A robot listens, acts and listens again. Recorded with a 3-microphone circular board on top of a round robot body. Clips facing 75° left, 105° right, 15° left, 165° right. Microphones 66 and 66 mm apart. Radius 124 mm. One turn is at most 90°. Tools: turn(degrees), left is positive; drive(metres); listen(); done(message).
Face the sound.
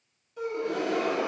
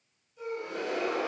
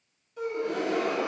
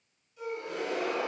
turn(degrees=50)
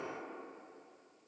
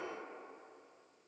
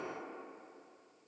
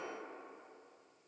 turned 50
done("I heard a gasp from this way, but can't make it out now.")